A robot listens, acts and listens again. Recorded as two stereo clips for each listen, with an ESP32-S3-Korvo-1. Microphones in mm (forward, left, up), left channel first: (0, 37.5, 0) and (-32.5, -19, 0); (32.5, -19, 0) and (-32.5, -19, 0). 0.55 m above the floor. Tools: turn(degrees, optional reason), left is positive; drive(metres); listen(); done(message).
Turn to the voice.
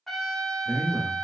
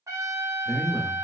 turn(degrees=-90, reason="The man speaking: 90° right.")
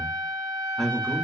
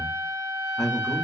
turn(degrees=-25, reason="The man speaking is now 25° right.")
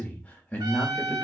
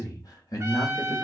done("Found it: a man speaking, straight ahead, 1 to 2 m away.")